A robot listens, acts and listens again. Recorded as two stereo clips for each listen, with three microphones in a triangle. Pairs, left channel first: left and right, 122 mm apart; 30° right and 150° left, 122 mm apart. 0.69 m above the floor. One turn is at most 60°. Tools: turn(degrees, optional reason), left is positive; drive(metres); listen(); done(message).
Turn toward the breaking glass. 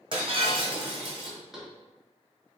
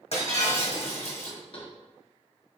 turn(degrees=-50, reason="The breaking glass: 50° right.")
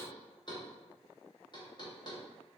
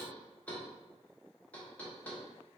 done("Facing where the breaking glass came from. I can't hear it now.")